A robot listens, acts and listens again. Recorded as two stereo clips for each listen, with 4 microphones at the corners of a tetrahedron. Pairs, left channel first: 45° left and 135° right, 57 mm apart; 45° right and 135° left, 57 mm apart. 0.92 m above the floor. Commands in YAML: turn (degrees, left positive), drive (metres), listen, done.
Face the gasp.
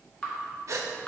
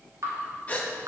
turn: -110
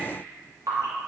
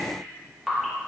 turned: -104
done: "I heard a gasp from this way, but can't make it out now."